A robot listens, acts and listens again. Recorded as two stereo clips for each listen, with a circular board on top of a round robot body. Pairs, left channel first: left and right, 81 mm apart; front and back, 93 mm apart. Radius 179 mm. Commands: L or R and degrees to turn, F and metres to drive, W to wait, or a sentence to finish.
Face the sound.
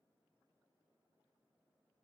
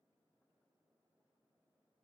W
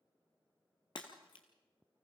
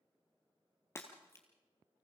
L65
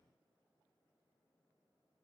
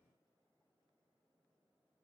Facing where the breaking glass came from. I can't hear it now.